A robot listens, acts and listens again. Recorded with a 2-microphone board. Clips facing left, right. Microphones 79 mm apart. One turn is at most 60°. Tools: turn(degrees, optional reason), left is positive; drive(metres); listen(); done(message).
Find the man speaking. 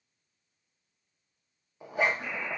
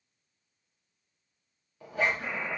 listen()
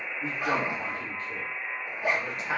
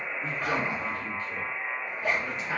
turn(degrees=60, reason="The man speaking: about 60° left or 120° left.")
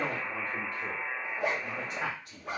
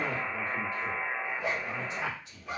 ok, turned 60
turn(degrees=60, reason="So it is at 60° left.")
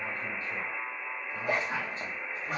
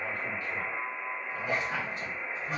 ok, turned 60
turn(degrees=30, reason="The man speaking is now 30° left.")
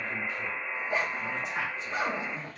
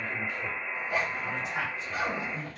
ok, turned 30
done("Facing the man speaking.")